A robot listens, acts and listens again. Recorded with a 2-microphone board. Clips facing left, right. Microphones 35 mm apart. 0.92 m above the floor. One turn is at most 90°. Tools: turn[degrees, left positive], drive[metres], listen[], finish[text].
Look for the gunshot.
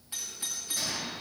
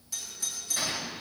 Thought: The gunshot: about 35° right or 145° right.
Action: turn[-35]
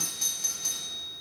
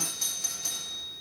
Action: listen[]
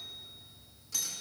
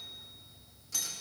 Action: finish[I heard a gunshot, but can't make it out now. It was about straight ahead or 110° right.]